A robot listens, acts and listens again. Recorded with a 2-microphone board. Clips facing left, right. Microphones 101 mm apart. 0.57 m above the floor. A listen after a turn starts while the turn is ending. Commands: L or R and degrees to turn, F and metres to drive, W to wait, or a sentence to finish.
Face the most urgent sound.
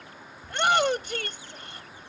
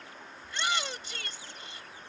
L60
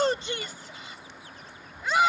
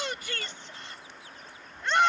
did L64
Facing the shout.